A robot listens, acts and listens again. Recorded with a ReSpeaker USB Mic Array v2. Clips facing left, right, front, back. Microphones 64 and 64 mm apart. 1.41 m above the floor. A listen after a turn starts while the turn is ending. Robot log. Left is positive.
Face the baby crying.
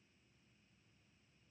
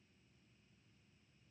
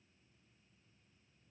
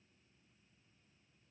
cmd idle
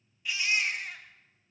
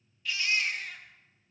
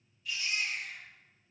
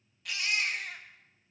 note: The baby crying: 165° left.
cmd yaw +165
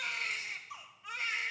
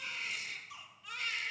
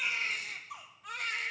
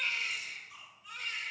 note: The baby crying is now 25° left.
cmd yaw +25
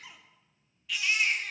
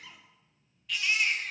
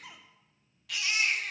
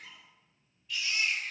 end: Found it: a baby crying, straight ahead, 1 to 2 m away.